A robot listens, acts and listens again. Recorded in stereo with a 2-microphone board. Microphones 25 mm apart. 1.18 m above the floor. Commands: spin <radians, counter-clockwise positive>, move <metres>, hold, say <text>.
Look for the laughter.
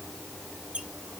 hold
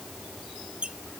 hold
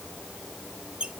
say I can't make out laughter to turn to.